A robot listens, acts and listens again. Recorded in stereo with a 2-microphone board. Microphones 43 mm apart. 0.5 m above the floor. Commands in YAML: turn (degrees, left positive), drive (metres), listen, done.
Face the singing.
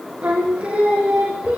turn: -25
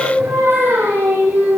turn: -130
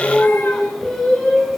turn: 10
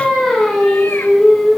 done: "Facing the singing."